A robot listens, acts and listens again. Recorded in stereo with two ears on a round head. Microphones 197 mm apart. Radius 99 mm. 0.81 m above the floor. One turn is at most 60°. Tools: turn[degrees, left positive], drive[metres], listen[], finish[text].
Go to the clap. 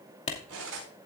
Thought: The clap: about 30° left or 150° left.
Action: turn[30]
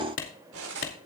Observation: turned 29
Thought: So it is at 120° left.
Action: turn[60]
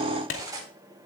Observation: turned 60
Thought: The clap is now 60° left.
Action: turn[60]
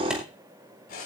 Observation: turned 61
Action: drive[1.0]
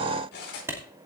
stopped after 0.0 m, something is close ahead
Thought: The clap is now 10° right.
Action: turn[-10]
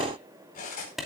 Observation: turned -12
Action: finish[Blocked. The clap is further on, straight ahead.]